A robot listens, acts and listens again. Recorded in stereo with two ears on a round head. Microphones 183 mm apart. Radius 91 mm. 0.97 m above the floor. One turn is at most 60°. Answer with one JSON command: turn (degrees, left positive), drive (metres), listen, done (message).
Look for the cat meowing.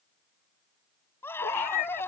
{"turn": 50}
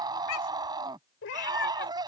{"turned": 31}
{"turn": 60}
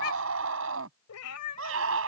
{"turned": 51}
{"turn": 60}
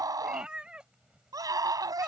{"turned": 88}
{"done": "Facing the cat meowing."}